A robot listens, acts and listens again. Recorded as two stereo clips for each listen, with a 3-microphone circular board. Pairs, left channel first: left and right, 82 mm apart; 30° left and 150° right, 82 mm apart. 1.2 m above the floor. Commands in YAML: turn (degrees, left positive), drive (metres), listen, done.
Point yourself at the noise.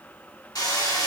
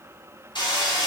turn: 55
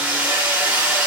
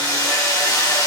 turn: -15
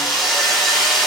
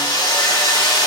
done: "Facing the hammering."